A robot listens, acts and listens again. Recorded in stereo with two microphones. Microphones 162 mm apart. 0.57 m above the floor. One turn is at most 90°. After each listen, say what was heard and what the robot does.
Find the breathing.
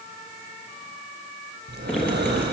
Turn 90° right.
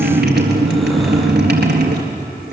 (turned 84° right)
Keep listening.
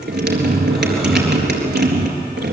Keep listening.
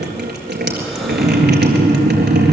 I heard breathing from this way, but can't make it out now.